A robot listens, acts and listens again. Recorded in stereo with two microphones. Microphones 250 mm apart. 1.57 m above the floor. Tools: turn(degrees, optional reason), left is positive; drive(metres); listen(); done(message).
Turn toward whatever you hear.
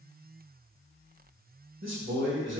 turn(degrees=-50, reason="The man speaking: about 50° right or 130° right.")
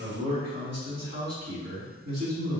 turn(degrees=-80, reason="So it is at 80° right.")
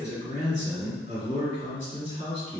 turn(degrees=-25, reason="The man speaking is now 25° right.")
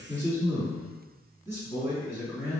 turn(degrees=-10, reason="The man speaking is now 10° right.")
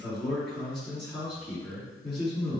done("Facing the man speaking.")